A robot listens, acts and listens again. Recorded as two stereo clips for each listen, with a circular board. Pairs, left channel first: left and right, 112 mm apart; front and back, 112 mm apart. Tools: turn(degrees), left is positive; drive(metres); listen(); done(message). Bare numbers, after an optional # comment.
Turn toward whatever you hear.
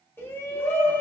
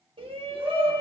# The shout: 155° left.
turn(155)
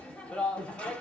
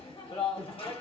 # The shout is now 15° left.
turn(15)
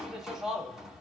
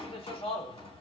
done("Found it: a shout, straight ahead, 1 to 2 m away.")